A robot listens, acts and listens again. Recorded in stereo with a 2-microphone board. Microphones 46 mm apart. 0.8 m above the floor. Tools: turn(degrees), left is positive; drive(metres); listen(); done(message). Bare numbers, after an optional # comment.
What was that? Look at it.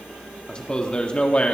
# The man speaking: about 25° left or 155° left.
turn(25)
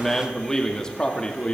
# The man speaking: about 20° left or 160° left.
turn(20)
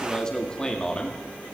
# The man speaking: about 20° left or 160° left.
turn(20)
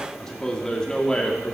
# The man speaking: about 20° left or 160° left.
turn(20)
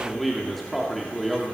done("Found it: a man speaking, straight ahead.")